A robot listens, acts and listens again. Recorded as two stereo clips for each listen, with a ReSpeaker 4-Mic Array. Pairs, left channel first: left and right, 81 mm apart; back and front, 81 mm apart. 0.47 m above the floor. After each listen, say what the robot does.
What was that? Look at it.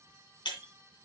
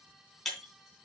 Turn 95° left.
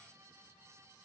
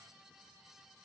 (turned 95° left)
I heard breaking glass from this way, but can't make it out now.